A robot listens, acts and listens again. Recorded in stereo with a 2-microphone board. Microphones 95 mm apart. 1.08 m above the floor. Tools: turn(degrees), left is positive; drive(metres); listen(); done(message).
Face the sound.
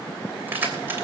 turn(degrees=-25)
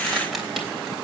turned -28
done("Found it: keys jangling, straight ahead, 2 to 4 m away.")